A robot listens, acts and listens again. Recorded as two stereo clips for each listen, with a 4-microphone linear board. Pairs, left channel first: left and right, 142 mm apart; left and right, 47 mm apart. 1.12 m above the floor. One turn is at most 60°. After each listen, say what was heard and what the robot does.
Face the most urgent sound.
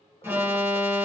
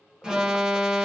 The alarm: about 15° right or 165° right. Turn 15° right.
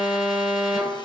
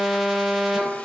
Facing the alarm.